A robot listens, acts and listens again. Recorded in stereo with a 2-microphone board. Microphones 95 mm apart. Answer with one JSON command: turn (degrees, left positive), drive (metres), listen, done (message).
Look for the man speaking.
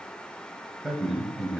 {"turn": -30}
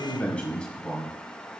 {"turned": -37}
{"turn": 10}
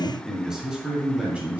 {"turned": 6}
{"turn": -15}
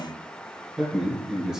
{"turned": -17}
{"done": "Found it: a man speaking, straight ahead."}